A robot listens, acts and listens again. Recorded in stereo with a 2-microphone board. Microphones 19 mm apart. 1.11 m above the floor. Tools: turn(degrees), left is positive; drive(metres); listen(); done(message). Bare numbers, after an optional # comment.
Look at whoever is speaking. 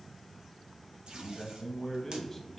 turn(30)
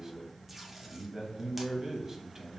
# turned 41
# So it is at 30° right.
turn(-30)
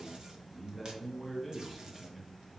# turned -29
done("Found it: a man speaking, straight ahead, under 1 m away.")